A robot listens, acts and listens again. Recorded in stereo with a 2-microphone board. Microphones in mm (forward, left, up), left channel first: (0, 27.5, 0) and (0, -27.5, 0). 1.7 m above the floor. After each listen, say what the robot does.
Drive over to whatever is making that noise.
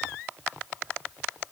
Keep listening.
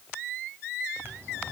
Turn 45° right.
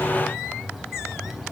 Drive 1.0 m forward.
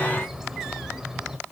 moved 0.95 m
Turn 10° right.
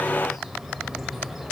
Drive 1.0 m forward.
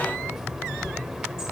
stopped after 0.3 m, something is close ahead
Turn 15° right.
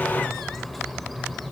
Arrived at the bird, straight ahead.